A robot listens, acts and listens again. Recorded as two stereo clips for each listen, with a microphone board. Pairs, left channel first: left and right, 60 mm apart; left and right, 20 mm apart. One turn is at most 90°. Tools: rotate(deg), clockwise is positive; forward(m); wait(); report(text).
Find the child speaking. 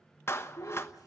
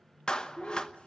rotate(-90)
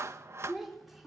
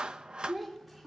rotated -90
report("Found it: a child speaking, straight ahead, 2 to 4 m away.")